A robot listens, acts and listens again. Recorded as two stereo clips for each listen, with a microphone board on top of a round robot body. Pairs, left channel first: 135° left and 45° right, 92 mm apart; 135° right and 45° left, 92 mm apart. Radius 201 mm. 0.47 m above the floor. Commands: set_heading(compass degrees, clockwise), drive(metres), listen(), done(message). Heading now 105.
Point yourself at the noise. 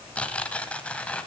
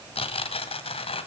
set_heading(250)
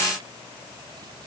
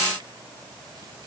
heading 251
listen()
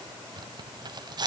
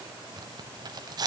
done("Found it: tearing paper, straight ahead.")